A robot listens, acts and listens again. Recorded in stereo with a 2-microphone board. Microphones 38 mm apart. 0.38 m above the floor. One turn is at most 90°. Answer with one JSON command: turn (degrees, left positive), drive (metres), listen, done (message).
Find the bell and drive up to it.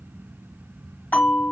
{"turn": 50}
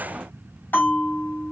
{"turn": 80}
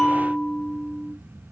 {"turn": 25}
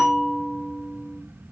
{"drive": 1.0}
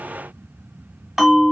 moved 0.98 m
{"turn": -10}
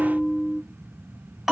{"drive": 1.0}
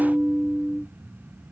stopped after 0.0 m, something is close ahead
{"turn": -10}
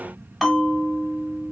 {"done": "Arrived at the bell, straight ahead."}